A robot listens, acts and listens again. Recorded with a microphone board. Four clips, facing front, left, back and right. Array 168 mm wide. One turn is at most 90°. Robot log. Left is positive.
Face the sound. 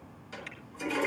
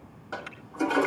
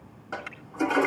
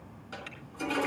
note: The toilet flushing: 145° left.
cmd yaw +90
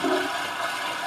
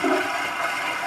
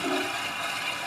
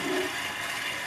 note: The toilet flushing is now 60° left.
cmd yaw +60
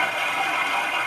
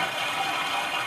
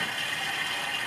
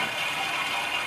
note: The toilet flushing is now 15° left.
cmd yaw +15
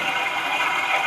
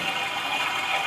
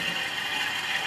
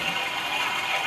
end: Facing the toilet flushing.